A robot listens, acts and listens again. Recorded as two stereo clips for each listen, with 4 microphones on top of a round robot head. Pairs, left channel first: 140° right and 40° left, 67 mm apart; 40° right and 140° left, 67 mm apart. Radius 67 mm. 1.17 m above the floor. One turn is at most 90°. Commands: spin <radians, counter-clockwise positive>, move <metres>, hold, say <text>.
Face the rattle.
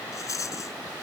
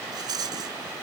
spin 1.57
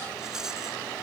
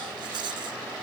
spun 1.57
spin 1.57
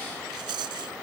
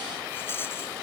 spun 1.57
spin 0.35
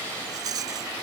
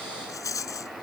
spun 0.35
say Facing the rattle.